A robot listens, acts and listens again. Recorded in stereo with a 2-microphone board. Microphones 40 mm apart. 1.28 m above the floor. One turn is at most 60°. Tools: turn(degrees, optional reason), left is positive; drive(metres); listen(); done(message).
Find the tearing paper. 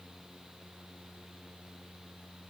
listen()
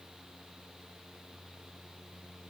listen()
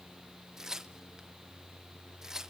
turn(degrees=-30)
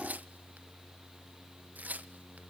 turn(degrees=-60, reason="So it is at 135° right.")
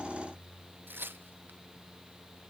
turn(degrees=-60, reason="The tearing paper is now 65° right.")
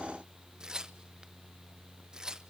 turn(degrees=-20, reason="The tearing paper is now 20° right.")
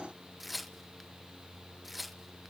done("Facing the tearing paper, under 1 m away.")